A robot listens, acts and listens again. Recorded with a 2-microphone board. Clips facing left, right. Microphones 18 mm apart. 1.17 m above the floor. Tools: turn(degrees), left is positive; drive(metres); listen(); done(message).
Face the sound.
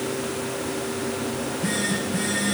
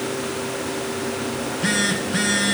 turn(degrees=-45)
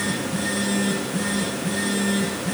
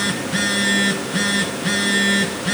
turn(degrees=-85)
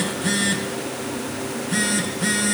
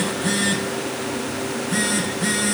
done("Found it: a phone buzzing, straight ahead.")